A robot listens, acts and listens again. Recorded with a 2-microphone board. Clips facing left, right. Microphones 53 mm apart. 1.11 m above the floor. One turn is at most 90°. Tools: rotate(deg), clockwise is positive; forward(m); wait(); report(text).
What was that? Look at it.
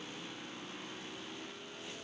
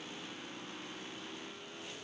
wait()
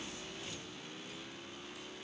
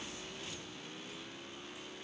wait()
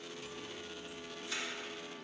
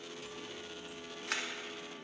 rotate(65)
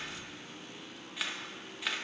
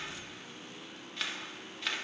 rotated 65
report("Found it: a camera shutter, straight ahead.")